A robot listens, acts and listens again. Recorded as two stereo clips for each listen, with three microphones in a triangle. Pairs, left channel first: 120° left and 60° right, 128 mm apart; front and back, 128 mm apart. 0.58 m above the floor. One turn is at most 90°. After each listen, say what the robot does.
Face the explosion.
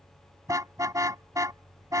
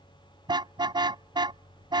Keep listening.
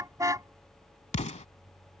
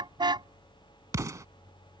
Turn 90° left.
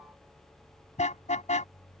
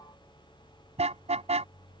Turn 30° left.
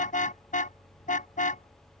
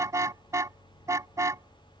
Facing where the explosion came from. I can't hear it now.